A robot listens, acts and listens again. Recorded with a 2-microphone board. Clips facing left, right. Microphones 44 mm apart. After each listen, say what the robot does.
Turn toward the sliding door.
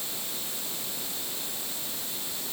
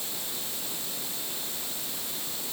Keep listening.
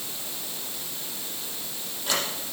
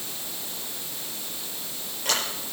Turn 90° right.
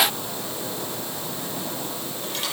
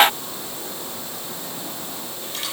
Found it: a sliding door, straight ahead, over 4 m away.